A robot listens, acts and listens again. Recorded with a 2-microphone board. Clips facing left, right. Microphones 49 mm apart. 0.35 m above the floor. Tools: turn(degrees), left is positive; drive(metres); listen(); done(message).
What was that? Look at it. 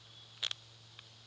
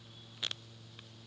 listen()
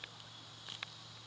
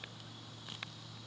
listen()
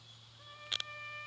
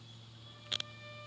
turn(degrees=45)
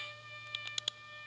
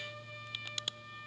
done("Facing the trumpet, 2 to 4 m away.")